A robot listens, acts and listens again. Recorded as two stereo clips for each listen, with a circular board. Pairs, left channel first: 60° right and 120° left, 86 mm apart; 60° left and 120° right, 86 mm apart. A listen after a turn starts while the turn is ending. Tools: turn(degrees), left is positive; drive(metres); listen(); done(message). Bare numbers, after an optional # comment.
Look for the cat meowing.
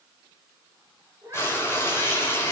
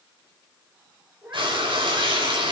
# The cat meowing: 175° left.
turn(175)
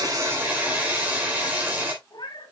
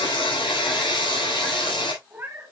# The cat meowing is now 60° right.
turn(-60)
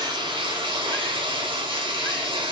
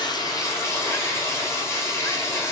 listen()
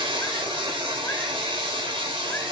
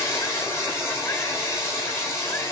listen()
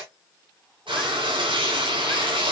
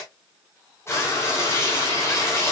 done("Facing where the cat meowing came from. I can't hear it now.")